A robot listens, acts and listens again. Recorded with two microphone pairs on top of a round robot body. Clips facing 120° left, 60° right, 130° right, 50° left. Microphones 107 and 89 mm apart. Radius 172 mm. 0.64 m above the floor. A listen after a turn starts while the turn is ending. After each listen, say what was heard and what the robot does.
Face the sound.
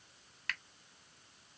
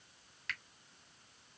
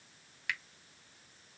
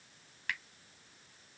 The finger snap: 95° left. Turn 95° left.
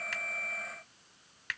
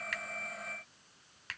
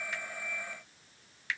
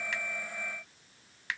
Found it: a finger snap, straight ahead.